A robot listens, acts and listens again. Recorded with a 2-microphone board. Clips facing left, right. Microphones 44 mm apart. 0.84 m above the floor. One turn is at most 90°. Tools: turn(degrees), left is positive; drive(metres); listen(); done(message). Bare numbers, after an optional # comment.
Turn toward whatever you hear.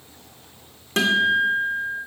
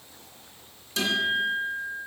# The guitar: about 60° left or 120° left.
turn(60)
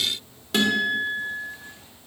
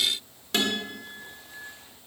done("Found it: a guitar, straight ahead, 1 to 2 m away.")